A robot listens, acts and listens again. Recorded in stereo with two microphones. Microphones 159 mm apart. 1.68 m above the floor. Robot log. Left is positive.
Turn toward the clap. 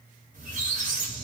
cmd idle
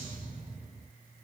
cmd idle
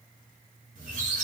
end: I can't make out a clap, only a squeak.